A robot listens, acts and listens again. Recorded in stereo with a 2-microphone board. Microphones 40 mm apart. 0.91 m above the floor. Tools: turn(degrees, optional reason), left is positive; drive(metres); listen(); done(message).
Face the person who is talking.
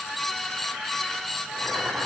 listen()
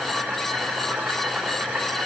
listen()
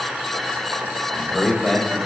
turn(degrees=30)
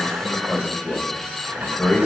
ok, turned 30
turn(degrees=145, reason="So it is at 145° left.")
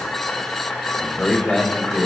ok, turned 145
turn(degrees=15, reason="The man speaking is now 15° left.")
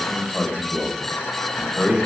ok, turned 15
done("Found it: a man speaking, straight ahead.")